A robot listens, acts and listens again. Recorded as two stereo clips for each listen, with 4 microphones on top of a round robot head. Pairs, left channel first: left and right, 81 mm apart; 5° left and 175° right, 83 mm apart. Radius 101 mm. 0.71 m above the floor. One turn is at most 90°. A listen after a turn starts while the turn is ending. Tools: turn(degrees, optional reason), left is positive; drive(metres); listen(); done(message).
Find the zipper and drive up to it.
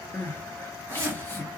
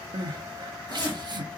turn(degrees=-30, reason="The zipper: 30° right.")
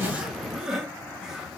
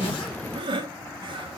listen()
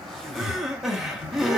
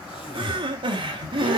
drive(metres=1.0)
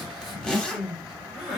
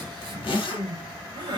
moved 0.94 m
turn(degrees=10, reason="The zipper is now 10° left.")
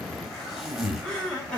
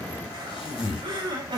drive(metres=1.0)
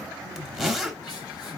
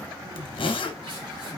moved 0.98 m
drive(metres=1.0)
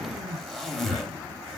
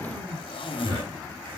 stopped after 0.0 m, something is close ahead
done("Arrived at the zipper, straight ahead.")